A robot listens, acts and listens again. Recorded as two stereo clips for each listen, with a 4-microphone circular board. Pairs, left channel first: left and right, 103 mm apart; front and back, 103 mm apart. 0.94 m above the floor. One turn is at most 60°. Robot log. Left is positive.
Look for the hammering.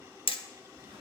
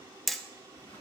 note: The hammering: 90° left.
cmd yaw +60
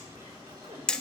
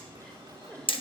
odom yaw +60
note: The hammering is now 10° left.
cmd yaw +10
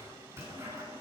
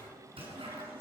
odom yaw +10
end: Facing the hammering.